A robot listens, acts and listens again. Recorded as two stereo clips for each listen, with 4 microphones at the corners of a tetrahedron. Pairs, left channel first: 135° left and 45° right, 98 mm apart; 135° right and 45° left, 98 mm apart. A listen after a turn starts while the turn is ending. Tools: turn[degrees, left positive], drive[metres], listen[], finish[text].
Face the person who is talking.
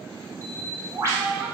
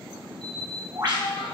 Thought: The child speaking: 125° right.
Action: turn[-125]
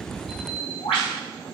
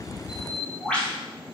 Action: listen[]
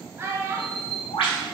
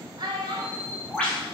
Thought: The child speaking is now 15° left.
Action: turn[15]
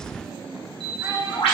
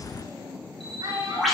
Action: finish[Facing the child speaking.]